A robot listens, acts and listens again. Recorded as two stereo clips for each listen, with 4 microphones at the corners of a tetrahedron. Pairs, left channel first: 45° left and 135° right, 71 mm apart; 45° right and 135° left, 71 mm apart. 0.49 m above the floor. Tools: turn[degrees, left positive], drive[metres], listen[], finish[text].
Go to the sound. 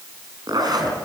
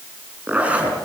Thought: The zipper: 155° right.
Action: turn[-155]
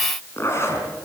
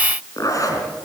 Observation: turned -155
Action: drive[1.0]
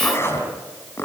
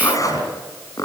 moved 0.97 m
Thought: The zipper is now 10° right.
Action: turn[-10]
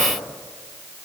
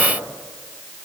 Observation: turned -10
Action: listen[]
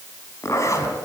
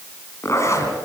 Action: drive[1.0]
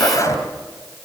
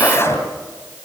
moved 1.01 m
Action: drive[1.0]
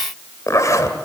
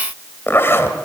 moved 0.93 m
Thought: The zipper is now 10° left.
Action: turn[10]
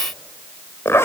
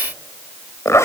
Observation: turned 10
Action: drive[1.0]
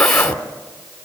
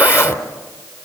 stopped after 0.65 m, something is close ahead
Action: finish[I am next to the zipper.]